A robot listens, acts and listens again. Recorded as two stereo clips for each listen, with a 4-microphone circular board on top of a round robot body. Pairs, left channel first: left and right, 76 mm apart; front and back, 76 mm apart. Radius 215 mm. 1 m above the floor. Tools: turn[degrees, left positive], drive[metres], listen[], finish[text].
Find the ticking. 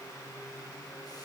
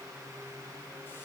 Action: listen[]
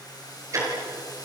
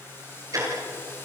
Thought: The ticking: 135° right.
Action: turn[-135]
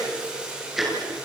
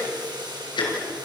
Action: finish[Facing the ticking.]